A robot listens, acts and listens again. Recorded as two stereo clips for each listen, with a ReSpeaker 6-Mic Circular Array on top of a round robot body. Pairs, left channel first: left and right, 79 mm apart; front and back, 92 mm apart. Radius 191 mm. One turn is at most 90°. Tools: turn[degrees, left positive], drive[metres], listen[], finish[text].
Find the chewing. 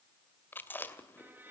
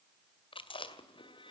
Thought: The chewing: 25° left.
Action: turn[25]
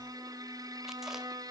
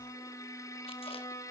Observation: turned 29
Action: listen[]
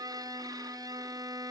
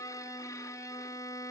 Action: listen[]
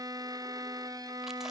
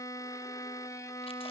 Action: finish[Facing where the chewing came from. I can't hear it now.]